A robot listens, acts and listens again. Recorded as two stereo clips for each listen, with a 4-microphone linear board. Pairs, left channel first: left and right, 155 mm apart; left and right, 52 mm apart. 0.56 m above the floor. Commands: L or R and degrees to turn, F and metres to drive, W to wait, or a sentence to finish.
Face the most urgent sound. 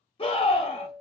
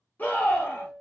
L35
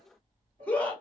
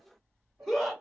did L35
L10
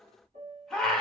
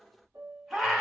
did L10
Found it: a scream, straight ahead, 1 to 2 m away.